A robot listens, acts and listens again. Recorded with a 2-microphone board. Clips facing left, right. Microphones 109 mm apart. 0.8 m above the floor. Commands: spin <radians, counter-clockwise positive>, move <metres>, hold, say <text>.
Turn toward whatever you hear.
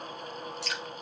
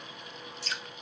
spin 1.22
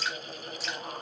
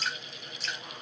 say Facing the dripping, 2 to 4 m away.